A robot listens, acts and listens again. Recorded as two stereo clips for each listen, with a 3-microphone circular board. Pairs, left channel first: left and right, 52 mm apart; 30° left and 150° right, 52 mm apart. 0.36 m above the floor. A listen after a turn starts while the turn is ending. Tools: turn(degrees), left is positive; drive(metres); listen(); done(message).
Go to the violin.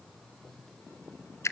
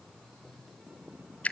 listen()
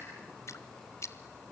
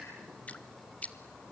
listen()
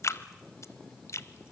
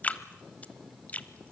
done("I can't make out a violin, only dripping.")